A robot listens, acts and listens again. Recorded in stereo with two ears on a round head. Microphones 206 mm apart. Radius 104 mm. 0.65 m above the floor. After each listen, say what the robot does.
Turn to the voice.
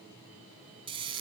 Keep listening.
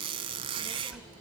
Turn 30° right.
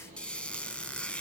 Turn 150° right.
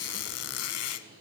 Keep listening.
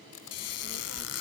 Turn 50° right.
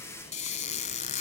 Facing the child speaking, 1 to 2 m away.